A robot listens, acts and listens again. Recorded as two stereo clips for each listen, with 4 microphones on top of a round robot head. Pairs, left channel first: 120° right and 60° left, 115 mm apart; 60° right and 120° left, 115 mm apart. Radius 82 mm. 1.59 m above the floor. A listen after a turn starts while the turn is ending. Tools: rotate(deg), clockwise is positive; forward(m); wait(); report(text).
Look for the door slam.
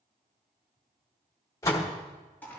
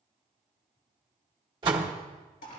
rotate(-175)
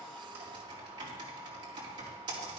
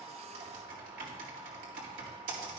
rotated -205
rotate(30)
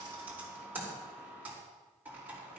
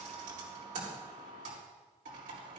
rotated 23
rotate(10)
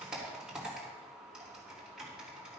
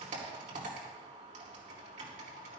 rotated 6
report("I heard a door slam from this way, but can't make it out now.")